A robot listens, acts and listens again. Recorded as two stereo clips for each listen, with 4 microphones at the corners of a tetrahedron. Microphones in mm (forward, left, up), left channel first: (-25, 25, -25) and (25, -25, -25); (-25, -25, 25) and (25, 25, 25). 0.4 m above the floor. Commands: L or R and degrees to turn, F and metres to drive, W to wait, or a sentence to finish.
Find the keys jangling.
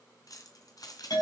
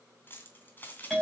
L160
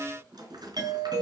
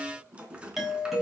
R30
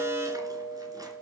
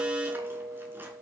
W
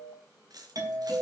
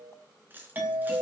R20
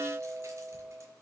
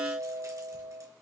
W
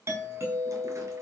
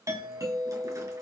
W
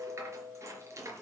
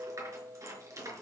Facing the keys jangling.